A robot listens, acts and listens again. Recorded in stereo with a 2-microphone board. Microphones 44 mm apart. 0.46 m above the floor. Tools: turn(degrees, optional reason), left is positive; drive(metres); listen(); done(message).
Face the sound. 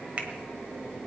turn(degrees=-35, reason="The finger snap: about 35° right or 145° right.")
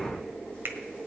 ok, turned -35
turn(degrees=-105, reason="So it is at 105° right.")
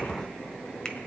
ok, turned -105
listen()
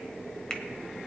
turn(degrees=20, reason="The finger snap is now 20° left.")
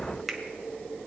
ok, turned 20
done("Facing the finger snap.")